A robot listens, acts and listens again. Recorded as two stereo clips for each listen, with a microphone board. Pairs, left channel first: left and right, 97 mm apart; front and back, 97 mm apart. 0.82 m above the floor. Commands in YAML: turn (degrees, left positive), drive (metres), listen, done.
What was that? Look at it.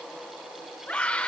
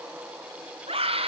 turn: 165
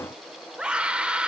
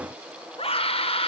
turn: -10
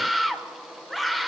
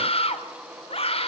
done: "Found it: a scream, straight ahead, 2 to 4 m away."